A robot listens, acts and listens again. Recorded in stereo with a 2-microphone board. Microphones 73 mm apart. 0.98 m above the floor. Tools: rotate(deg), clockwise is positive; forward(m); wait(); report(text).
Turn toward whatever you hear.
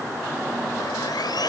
rotate(-90)
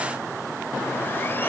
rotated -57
rotate(-35)
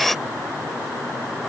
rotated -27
report("Found it: sawing, straight ahead.")